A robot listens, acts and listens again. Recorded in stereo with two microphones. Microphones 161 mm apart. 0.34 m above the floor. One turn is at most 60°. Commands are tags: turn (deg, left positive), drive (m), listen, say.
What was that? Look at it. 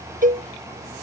<turn deg="-55"/>
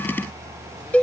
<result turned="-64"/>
<turn deg="10"/>
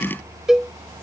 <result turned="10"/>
<say>Facing the cowbell.</say>